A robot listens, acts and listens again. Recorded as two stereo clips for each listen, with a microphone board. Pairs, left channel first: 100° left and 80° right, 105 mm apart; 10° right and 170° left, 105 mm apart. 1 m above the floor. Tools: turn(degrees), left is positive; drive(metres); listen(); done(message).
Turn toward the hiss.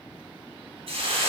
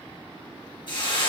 turn(degrees=-50)
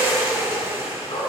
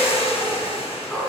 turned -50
turn(degrees=-15)
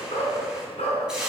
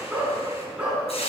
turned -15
done("Found it: a hiss, straight ahead, 2 to 4 m away.")